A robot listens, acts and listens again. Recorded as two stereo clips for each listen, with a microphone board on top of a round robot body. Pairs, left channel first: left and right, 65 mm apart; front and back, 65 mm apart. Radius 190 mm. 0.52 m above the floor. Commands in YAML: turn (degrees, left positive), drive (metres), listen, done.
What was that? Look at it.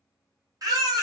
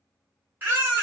turn: -120
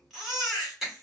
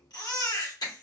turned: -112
done: "Found it: a baby crying, straight ahead, 2 to 4 m away."